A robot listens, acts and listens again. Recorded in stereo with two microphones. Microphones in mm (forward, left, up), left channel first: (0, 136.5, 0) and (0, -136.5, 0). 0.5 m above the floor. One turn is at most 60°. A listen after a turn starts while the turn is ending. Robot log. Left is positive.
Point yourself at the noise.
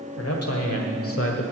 note: The man speaking: about 50° left or 130° left.
cmd yaw +50
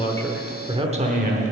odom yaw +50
note: So it is at 35° right.
cmd yaw -35
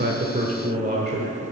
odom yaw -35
note: The man speaking is now 40° right.
cmd yaw -40
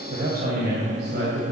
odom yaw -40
note: The man speaking is now 40° right.
cmd yaw -40
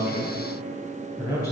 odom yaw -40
note: The man speaking is now 15° left.
cmd yaw +15
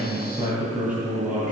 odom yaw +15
end: Found it: a man speaking, straight ahead, 2 to 4 m away.